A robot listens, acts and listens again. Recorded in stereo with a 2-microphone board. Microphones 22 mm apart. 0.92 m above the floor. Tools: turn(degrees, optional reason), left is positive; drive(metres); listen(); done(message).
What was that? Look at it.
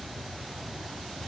listen()
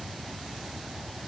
listen()
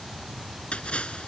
turn(degrees=55, reason="The splash: about 55° left or 125° left.")
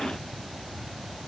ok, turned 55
listen()
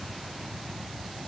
done("I heard a splash, but can't make it out now. It was about straight ahead or 70° left.")